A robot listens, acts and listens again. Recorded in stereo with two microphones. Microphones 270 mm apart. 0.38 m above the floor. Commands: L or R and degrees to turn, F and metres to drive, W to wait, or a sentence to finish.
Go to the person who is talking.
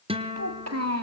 R65
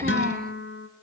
R35
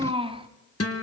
R20
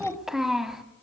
F1.0
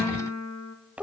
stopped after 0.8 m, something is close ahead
I am next to the child speaking.